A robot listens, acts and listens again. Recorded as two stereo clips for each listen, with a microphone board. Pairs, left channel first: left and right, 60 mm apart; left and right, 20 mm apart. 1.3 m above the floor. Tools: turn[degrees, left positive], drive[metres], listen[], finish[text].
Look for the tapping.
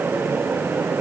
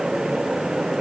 Action: listen[]
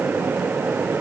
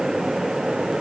Action: listen[]
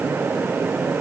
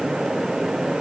Action: finish[I can't make out tapping to turn to.]